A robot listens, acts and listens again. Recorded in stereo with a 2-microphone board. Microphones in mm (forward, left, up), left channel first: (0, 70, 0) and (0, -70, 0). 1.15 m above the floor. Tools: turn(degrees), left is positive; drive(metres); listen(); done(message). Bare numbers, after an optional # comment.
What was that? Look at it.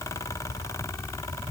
listen()
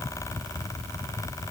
listen()
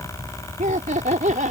# The laughter: about 65° right or 115° right.
turn(-65)
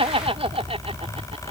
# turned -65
# So it is at 45° right.
turn(-45)
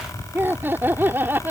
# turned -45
# The laughter is now 15° right.
turn(-15)
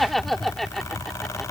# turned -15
done("Facing the laughter.")